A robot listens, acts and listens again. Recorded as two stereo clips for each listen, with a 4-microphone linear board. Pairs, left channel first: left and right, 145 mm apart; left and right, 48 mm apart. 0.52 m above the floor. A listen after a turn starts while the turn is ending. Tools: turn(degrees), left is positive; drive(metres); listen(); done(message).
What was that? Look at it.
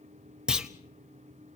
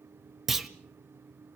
turn(degrees=-30)
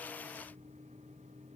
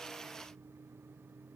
listen()
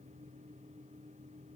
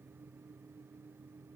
done("I heard a clunk, but can't make it out now. It was about 25° left or 145° right.")